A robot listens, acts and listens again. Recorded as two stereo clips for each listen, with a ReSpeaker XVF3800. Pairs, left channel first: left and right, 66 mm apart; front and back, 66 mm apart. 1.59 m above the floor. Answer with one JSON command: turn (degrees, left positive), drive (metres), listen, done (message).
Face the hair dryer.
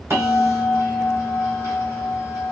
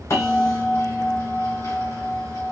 {"listen": true}
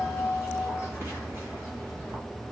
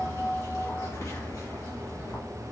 {"listen": true}
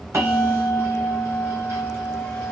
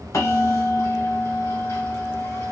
{"done": "I can't make out a hair dryer, only a bell."}